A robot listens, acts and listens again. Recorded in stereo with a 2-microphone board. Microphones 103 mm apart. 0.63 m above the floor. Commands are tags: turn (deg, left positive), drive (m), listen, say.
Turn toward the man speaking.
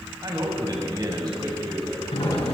<turn deg="-40"/>
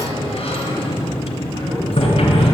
<listen/>
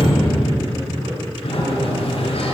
<listen/>
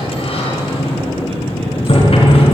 <say>I heard a man speaking, but can't make it out now. It was about straight ahead or 100° right.</say>